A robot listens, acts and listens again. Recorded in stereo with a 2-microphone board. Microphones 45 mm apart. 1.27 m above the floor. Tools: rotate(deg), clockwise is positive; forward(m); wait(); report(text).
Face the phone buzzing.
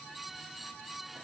wait()
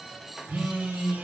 rotate(50)
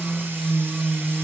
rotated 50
report("Facing the phone buzzing.")